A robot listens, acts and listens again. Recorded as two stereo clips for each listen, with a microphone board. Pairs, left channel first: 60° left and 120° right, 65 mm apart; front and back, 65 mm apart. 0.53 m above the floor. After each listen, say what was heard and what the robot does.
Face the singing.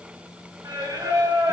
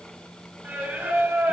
The singing: 125° right. Turn 125° right.
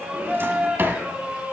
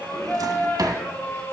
The singing is now 50° right. Turn 50° right.
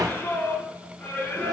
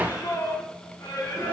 Found it: singing, straight ahead, over 4 m away.